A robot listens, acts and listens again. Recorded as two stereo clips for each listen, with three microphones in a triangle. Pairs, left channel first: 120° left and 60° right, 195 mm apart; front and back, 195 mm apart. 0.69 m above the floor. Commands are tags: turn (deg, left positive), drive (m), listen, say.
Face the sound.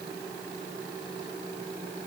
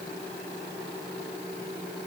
<listen/>
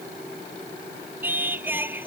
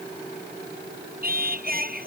<turn deg="-140"/>
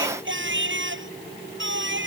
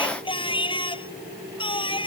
<turn deg="-65"/>
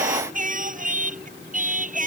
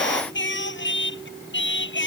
<turn deg="-15"/>
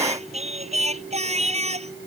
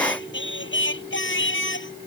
<say>Found it: singing, straight ahead.</say>